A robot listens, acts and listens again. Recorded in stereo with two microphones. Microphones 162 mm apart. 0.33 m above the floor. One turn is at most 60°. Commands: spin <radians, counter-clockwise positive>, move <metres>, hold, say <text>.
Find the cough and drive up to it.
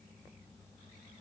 hold
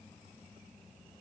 hold
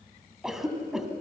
spin 0.52
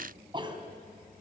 spin -0.61
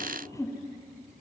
spin 0.44
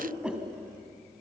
move 1.0
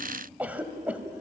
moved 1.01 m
spin -0.17
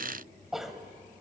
move 1.0
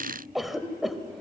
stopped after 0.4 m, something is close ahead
say Arrived at the cough, straight ahead.